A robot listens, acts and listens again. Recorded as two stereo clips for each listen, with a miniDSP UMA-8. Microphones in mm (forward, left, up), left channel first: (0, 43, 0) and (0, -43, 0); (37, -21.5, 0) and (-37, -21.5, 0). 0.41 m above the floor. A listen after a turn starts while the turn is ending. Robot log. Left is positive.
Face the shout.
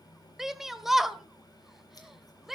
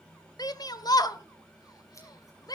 end: Found it: a shout, straight ahead.